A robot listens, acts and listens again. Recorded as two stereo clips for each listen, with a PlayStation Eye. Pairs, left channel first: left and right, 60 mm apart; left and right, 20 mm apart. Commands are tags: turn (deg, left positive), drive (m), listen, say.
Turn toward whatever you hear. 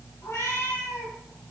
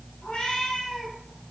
<turn deg="60"/>
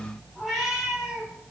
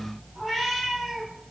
<say>Found it: a cat meowing, straight ahead.</say>